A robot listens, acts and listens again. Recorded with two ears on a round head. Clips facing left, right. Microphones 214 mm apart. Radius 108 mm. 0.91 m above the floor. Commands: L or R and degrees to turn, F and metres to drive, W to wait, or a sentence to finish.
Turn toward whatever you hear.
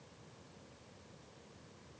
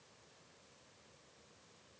W
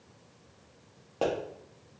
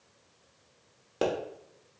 R25
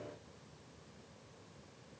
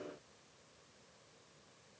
W
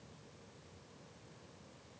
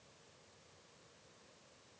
I heard a pop, but can't make it out now. It was about straight ahead or 130° right.